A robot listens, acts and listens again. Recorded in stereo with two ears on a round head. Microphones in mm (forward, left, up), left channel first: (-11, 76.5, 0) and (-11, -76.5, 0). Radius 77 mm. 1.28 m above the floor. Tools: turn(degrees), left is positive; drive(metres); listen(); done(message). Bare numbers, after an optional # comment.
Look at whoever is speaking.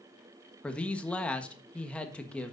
turn(30)
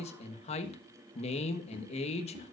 # So it is at 140° left.
turn(140)
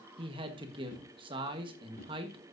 # The man speaking is now 30° right.
turn(-30)
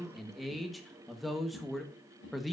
done("Facing the man speaking.")